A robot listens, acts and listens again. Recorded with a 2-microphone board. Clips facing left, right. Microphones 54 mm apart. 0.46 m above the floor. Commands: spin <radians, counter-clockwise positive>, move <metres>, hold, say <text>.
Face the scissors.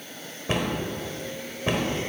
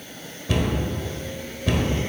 hold
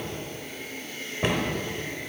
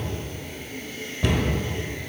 hold
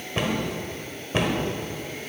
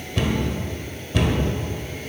say I can't make out scissors, only a cupboard door.